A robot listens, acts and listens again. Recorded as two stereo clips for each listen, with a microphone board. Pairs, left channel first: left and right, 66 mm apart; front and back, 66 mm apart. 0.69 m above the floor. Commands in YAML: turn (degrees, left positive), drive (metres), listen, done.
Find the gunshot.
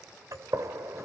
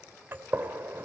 turn: -125
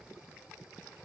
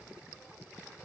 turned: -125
done: "I heard a gunshot from this way, but can't make it out now."